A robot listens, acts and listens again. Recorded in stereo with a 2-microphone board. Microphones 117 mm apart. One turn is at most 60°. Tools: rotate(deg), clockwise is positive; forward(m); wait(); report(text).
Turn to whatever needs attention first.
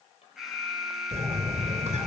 rotate(30)
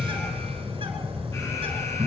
wait()
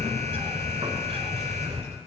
wait()
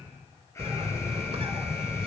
report("I heard an alarm, but can't make it out now. It was about 25° left or 145° right.")